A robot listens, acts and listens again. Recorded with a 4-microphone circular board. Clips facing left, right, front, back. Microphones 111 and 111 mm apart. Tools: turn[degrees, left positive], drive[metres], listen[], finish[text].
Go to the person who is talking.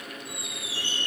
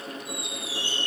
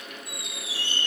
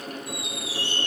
Action: listen[]
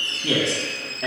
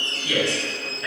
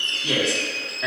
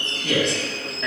Thought: The man speaking: 80° left.
Action: turn[80]
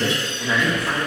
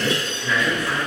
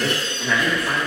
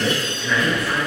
Thought: The man speaking is now 25° left.
Action: turn[25]
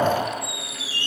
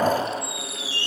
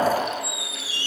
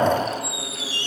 Action: drive[1.0]
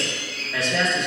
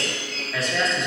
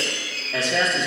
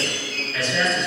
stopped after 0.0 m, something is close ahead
Action: finish[Something is in my way. I am facing the man speaking but have not reached it.]